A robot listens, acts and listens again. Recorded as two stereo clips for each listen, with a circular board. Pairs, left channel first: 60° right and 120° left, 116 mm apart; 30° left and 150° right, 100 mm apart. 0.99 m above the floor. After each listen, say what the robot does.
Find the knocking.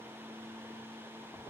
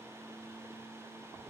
Keep listening.
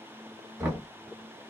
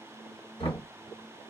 Turn 45° left.
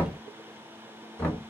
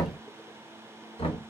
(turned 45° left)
Turn 15° left.
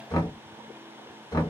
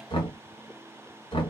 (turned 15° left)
Facing the knocking, 1 to 2 m away.